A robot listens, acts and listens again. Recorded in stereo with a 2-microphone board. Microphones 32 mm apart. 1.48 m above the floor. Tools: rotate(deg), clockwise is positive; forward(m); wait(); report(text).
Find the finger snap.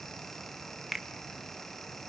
rotate(30)
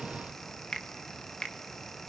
rotate(-30)
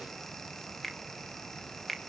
report("Facing the finger snap, 1 to 2 m away.")